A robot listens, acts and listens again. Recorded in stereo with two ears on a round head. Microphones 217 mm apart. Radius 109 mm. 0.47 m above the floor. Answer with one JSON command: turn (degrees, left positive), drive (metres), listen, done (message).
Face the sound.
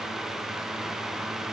{"listen": true}
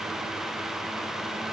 {"listen": true}
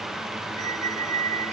{"turn": -30}
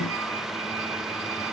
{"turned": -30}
{"listen": true}
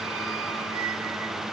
{"listen": true}
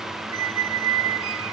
{"turn": -115}
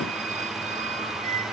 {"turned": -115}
{"turn": -30}
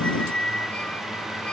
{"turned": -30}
{"done": "Found it: a squeak, straight ahead."}